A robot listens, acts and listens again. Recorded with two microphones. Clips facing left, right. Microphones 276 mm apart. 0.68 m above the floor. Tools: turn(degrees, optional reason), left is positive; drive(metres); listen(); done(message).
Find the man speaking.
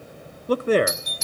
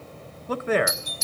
turn(degrees=40, reason="The man speaking: about 40° left or 140° left.")
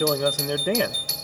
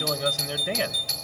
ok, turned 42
turn(degrees=90, reason="So it is at 90° left.")
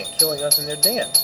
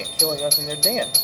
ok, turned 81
turn(degrees=10, reason="The man speaking is now 10° left.")
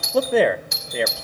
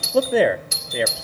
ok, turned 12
done("Found it: a man speaking, straight ahead.")